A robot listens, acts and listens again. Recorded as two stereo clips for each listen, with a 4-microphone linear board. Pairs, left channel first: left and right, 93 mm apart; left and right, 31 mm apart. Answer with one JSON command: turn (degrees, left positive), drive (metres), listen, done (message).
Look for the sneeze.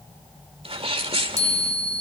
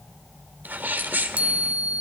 {"turn": -75}
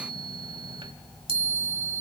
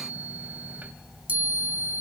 {"listen": true}
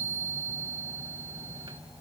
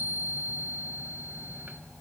{"done": "I heard a sneeze, but can't make it out now. It was about straight ahead or 30° right."}